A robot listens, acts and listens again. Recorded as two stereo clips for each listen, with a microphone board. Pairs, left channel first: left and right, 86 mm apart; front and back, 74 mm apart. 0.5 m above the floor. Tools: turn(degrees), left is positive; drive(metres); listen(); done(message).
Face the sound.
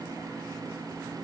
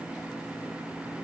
listen()
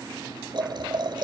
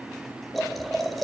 turn(degrees=-90)
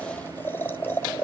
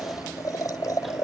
turn(degrees=30)
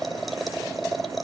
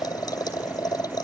done("Facing the boiling.")